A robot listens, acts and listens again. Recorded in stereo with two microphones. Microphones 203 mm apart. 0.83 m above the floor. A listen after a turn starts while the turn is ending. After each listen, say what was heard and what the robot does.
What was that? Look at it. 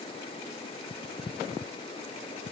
Keep listening.
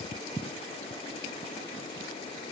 Keep listening.
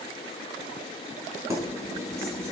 Turn 30° right.
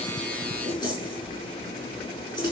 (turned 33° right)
So it is at 20° left. Turn 20° left.
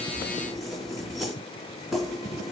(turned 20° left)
Found it: keys jangling, straight ahead.